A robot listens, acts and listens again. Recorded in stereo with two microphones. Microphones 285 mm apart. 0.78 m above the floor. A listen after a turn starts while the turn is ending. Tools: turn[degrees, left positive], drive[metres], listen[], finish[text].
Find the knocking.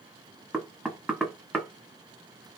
Action: turn[30]
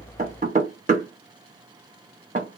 Thought: So it is at 30° right.
Action: turn[-30]
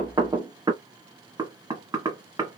Thought: The knocking is now 15° right.
Action: turn[-15]
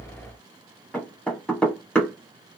Action: finish[Facing the knocking.]